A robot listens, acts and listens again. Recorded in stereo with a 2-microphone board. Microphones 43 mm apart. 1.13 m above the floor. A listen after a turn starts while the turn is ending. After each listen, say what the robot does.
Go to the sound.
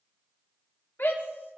Turn 60° left.
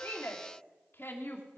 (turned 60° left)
Turn 65° left.
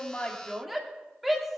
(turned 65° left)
Drive 1.0 m forward.
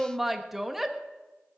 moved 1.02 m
Drive 1.0 m forward.
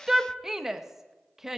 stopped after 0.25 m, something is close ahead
Turn 10° right.
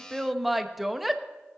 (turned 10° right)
I am next to the shout.